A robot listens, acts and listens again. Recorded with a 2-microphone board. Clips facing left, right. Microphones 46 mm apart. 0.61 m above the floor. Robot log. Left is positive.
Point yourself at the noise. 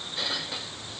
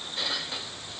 cmd idle
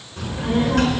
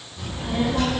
note: The child speaking: about 60° left or 120° left.
cmd yaw +60
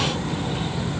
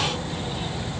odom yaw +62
note: So it is at 60° left.
cmd yaw +60
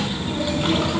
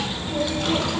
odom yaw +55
note: The child speaking is now 15° left.
cmd yaw +15
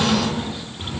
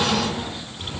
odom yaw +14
note: The child speaking is now 10° left.
cmd yaw +10
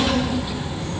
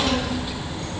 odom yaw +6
note: The child speaking is now 10° left.
cmd yaw +10
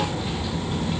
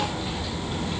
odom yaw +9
end: Facing the child speaking, 2 to 4 m away.